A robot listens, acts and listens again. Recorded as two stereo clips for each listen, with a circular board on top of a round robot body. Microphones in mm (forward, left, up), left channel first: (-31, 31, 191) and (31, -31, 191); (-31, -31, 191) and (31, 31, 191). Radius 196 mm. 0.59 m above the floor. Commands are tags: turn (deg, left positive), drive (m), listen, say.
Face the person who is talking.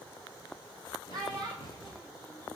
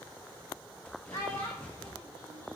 <turn deg="-85"/>
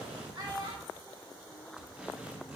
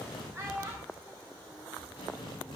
<turn deg="-15"/>
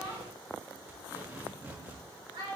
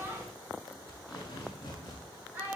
<turn deg="-25"/>
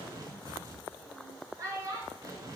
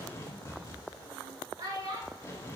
<say>Facing the child speaking.</say>